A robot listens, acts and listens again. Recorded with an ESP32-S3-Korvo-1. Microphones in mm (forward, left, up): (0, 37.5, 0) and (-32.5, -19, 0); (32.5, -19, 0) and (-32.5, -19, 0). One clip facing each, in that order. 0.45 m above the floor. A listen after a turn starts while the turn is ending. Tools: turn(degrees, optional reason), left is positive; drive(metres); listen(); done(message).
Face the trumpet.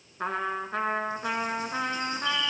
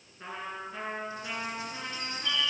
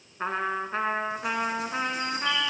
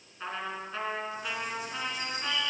turn(degrees=45, reason="The trumpet: 45° left.")
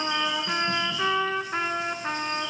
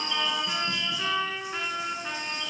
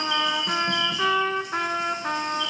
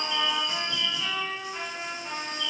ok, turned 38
turn(degrees=10, reason="The trumpet is now 10° left.")
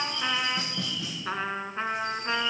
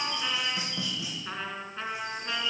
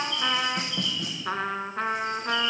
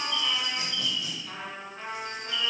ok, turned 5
done("Found it: a trumpet, straight ahead.")